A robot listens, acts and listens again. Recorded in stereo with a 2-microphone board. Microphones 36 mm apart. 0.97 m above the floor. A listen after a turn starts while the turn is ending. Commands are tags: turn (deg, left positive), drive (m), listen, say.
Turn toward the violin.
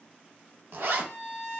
<turn deg="30"/>
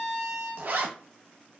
<turn deg="-15"/>
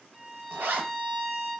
<say>Found it: a violin, straight ahead.</say>